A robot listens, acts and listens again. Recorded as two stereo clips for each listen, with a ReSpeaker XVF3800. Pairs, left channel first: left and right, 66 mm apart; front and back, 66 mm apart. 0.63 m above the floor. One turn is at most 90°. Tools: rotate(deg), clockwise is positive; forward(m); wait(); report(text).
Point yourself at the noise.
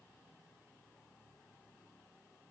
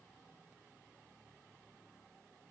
wait()
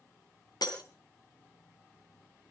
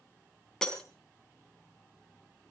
rotate(-80)
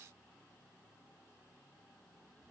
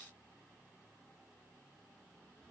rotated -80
report("I heard breaking glass from this way, but can't make it out now.")